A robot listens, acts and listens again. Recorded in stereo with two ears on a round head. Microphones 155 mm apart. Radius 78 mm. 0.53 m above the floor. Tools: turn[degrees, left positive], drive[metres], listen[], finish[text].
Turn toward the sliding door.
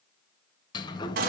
Thought: The sliding door: about 25° left or 155° left.
Action: turn[25]
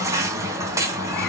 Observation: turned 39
Thought: So it is at 115° left.
Action: turn[115]
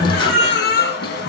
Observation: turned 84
Thought: The sliding door is now 30° left.
Action: turn[30]
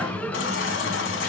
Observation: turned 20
Thought: The sliding door is now 10° left.
Action: turn[10]
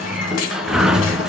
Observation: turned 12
Action: finish[Found it: a sliding door, straight ahead.]